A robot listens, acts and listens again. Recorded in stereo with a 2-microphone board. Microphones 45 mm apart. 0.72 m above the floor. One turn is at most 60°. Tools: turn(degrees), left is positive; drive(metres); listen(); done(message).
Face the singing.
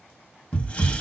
listen()
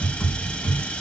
listen()
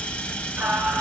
turn(degrees=-45)
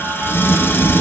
listen()
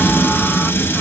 listen()
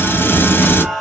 done("Found it: singing, straight ahead.")